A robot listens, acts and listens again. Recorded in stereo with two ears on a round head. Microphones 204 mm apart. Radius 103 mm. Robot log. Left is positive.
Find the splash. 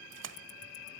note: The splash: about 55° right or 125° right.
cmd yaw -55
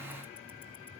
cmd idle
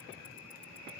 end: I heard a splash, but can't make it out now. It was about straight ahead or 70° right.